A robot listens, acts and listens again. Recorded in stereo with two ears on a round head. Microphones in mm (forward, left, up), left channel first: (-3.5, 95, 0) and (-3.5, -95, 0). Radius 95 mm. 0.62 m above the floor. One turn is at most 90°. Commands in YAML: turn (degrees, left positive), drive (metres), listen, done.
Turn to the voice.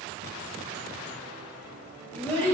turn: 30
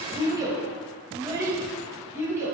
turn: -10
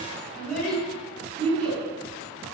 done: "Found it: a child speaking, straight ahead."